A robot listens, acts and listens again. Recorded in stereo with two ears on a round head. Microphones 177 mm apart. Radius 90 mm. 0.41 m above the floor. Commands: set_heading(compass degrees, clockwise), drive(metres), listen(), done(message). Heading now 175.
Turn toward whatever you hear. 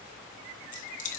set_heading(130)
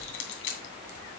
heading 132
set_heading(17)
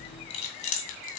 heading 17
set_heading(337)
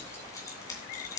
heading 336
set_heading(321)
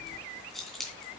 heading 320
done("Found it: keys jangling, straight ahead, 2 to 4 m away.")